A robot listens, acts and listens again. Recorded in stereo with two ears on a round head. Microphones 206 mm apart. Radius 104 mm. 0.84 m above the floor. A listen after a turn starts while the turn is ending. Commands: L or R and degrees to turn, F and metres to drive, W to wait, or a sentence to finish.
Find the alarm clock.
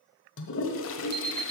R50
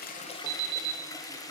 R80
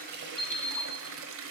Found it: an alarm clock, straight ahead, 1 to 2 m away.